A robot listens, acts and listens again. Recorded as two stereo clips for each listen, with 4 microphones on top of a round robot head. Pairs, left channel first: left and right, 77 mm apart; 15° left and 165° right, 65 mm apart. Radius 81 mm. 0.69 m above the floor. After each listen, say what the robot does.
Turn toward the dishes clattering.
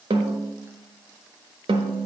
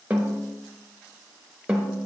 Keep listening.
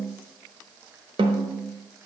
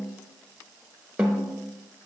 Keep listening.
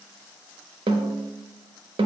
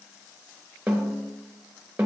I can't make out dishes clattering to turn to.